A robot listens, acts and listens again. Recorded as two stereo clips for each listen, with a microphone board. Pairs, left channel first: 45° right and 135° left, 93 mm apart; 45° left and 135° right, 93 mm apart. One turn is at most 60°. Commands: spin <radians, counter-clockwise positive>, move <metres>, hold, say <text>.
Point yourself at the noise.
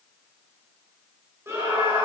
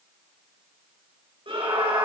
spin -1.05
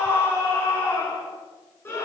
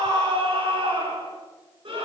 spin -1.05
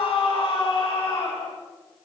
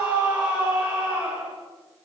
spin -1.05
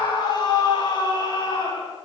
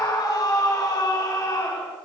say Facing the scream.